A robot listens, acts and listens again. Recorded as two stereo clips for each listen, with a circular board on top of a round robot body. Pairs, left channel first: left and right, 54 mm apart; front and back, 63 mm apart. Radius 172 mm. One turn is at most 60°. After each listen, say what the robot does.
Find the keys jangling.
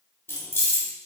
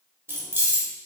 Turn 60° left.
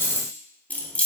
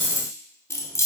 Turn 25° left.
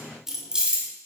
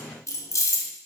Turn 25° right.
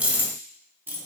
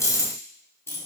Turn 45° right.
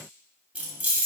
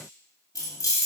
Turn 30° right.
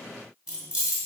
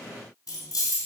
Turn 20° right.
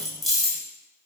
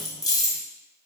Found it: keys jangling, straight ahead, 2 to 4 m away.